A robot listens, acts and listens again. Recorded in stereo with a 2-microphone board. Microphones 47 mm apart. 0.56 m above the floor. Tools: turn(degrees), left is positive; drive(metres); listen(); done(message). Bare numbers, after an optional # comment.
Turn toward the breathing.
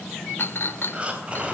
# The breathing: about 25° right or 155° right.
turn(-25)
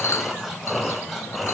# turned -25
done("Facing the breathing, 2 to 4 m away.")